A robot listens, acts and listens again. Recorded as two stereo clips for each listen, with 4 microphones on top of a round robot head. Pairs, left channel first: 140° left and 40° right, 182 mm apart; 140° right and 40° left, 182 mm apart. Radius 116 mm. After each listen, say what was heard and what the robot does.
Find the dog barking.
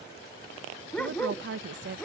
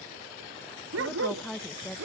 The dog barking: 55° left. Turn 55° left.
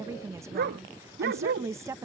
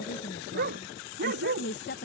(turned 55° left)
Found it: a dog barking, straight ahead.